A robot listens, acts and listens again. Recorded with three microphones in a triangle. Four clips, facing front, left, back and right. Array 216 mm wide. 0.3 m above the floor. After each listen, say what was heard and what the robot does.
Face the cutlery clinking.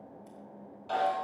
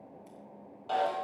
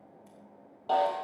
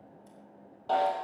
Keep listening.
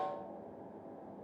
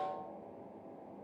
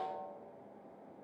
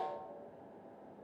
Keep listening.
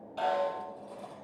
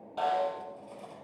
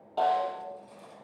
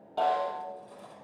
The cutlery clinking: 25° left. Turn 25° left.
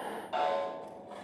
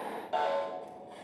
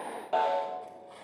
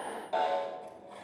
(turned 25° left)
Facing the cutlery clinking, over 4 m away.